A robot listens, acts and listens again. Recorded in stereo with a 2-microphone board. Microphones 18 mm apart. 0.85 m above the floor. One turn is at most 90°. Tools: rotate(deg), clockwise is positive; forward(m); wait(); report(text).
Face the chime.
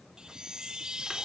rotate(45)
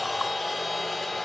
wait()
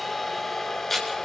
wait()
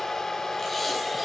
report("I heard a chime, but can't make it out now. It was about straight ahead or 90° right.")